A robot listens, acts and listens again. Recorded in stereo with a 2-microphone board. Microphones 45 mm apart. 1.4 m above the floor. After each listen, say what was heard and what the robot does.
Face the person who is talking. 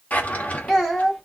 Turn 30° left.
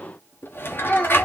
So it is at 150° left. Turn 150° left.
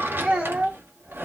The child speaking is now 25° right. Turn 25° right.
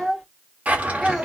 Facing the child speaking.